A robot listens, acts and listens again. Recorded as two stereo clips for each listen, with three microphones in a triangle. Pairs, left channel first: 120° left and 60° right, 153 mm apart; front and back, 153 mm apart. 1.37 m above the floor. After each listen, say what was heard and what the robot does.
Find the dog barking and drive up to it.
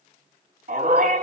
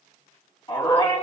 The dog barking: 55° right. Turn 55° right.
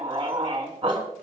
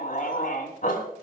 Drive 1.0 m forward.
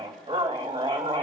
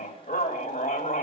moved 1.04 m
Drive 1.0 m forward.
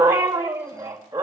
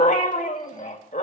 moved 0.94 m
Drive 1.0 m forward.
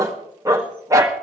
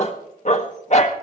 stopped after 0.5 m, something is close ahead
I am next to the dog barking.